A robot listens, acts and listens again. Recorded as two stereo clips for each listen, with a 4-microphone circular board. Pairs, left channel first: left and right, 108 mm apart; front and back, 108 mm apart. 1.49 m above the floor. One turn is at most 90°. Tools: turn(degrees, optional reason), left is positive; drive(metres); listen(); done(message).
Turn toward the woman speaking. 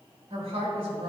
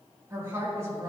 turn(degrees=-90, reason="The woman speaking: 120° right.")
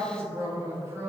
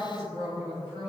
turn(degrees=-30, reason="The woman speaking is now 30° right.")
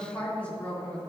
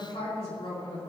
turn(degrees=15, reason="The woman speaking is now 15° left.")
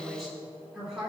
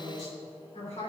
done("Facing the woman speaking.")